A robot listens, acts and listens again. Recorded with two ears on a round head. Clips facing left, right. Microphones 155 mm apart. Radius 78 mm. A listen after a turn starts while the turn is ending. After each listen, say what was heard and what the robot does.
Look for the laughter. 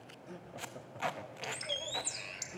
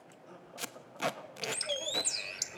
The laughter: about 20° left or 160° left. Turn 20° left.
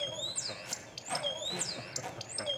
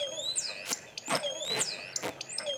Keep listening.
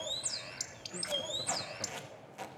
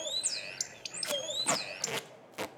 Keep listening.
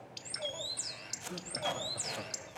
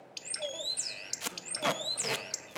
I heard laughter, but can't make it out now. It was about straight ahead or 140° left.